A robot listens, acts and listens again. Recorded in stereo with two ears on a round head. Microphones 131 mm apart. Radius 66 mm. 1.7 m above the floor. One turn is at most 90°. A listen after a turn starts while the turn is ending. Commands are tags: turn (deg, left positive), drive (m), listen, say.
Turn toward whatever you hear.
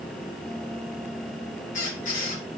<turn deg="55"/>
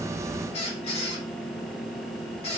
<turn deg="50"/>
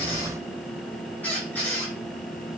<turn deg="15"/>
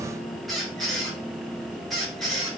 <say>Facing the squeak.</say>